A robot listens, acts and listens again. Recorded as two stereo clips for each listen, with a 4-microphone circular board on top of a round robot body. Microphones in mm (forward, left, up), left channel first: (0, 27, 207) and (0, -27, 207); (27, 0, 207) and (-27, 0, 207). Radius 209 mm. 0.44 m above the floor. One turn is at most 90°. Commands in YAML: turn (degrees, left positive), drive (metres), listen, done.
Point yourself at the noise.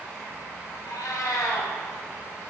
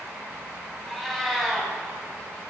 turn: 85
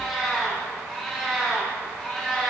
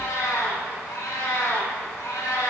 done: "Found it: a cat meowing, straight ahead."